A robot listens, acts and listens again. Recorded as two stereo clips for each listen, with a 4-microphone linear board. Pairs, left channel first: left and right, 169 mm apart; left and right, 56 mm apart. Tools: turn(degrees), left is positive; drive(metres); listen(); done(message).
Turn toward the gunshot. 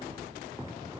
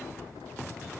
listen()
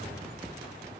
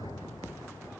listen()
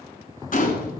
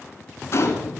turn(degrees=55)
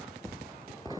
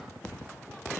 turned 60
listen()
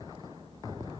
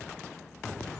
done("I heard a gunshot, but can't make it out now. It was about 5° right or 65° left.")